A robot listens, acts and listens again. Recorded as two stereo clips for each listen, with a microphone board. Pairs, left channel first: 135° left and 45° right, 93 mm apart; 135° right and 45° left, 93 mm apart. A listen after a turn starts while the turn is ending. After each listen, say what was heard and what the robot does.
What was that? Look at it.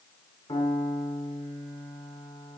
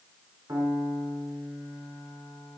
The piano: 100° left. Turn 100° left.
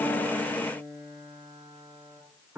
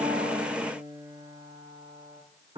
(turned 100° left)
The piano is now 25° left. Turn 25° left.
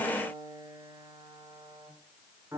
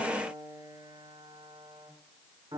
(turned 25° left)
The piano is now 15° left. Turn 15° left.
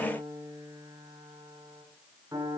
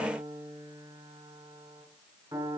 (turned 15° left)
Found it: a piano, straight ahead, over 4 m away.